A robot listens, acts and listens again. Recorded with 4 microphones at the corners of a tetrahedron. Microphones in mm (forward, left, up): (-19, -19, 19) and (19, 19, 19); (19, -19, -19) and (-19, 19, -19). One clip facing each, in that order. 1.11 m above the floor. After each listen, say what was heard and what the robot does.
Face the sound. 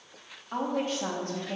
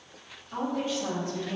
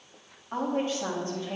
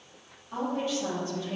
The woman speaking: 100° right. Turn 100° right.
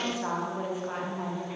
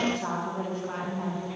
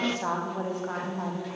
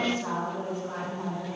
The woman speaking is now 65° right. Turn 65° right.
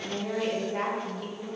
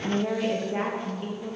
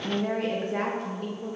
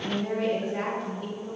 The woman speaking is now 20° right. Turn 20° right.
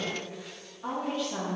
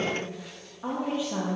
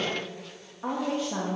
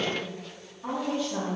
The woman speaking is now 25° right. Turn 25° right.
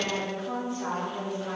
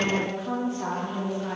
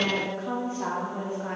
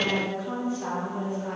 Facing the woman speaking.